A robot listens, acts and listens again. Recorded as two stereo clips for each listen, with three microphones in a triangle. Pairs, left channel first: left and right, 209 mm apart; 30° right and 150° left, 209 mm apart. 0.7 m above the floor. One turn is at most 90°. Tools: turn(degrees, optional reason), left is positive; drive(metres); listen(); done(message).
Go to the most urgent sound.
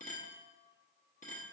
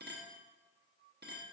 listen()
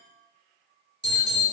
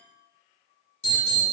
turn(degrees=-55, reason="The alarm: 55° right.")
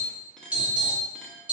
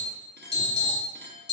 drive(metres=1.0)
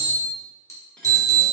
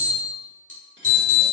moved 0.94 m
turn(degrees=-15, reason="The alarm is now 15° right.")
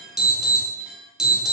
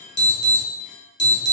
drive(metres=1.0)
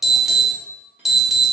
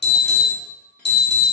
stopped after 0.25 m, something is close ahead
done("I am next to the alarm.")